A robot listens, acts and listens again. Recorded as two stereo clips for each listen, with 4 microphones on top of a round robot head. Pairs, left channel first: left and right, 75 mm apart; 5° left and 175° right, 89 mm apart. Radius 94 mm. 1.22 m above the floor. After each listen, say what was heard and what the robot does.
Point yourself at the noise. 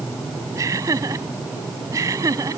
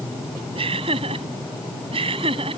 The laughter: 145° right. Turn 145° right.
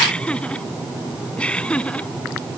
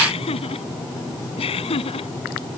The laughter is now 15° left. Turn 15° left.
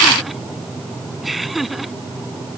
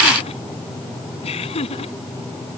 Found it: laughter, straight ahead.